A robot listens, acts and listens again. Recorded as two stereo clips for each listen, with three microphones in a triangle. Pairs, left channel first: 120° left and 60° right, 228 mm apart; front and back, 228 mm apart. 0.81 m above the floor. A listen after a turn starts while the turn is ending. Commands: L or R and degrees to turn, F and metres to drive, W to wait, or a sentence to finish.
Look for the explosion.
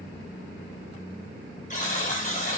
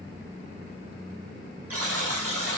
W
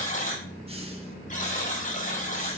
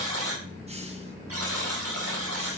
W
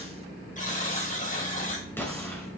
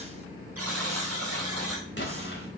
L40
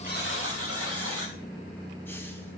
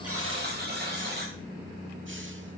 Facing where the explosion came from. I can't hear it now.